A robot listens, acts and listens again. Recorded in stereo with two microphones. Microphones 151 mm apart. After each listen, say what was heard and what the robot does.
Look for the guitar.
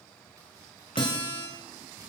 The guitar: about 30° left or 150° left. Turn 30° left.
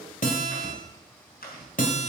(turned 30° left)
So it is at 120° left. Turn 120° left.
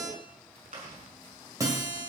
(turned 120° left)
The guitar is now 20° right. Turn 20° right.
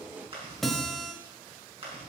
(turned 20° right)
Facing the guitar.